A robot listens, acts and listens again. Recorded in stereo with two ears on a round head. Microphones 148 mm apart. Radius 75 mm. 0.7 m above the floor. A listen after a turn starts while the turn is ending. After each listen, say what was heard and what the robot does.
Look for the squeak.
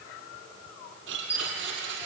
Turn 30° right.
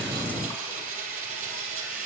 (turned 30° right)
Keep listening.
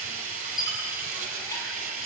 So it is at 20° left. Turn 20° left.
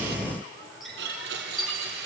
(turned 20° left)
Found it: a squeak, straight ahead.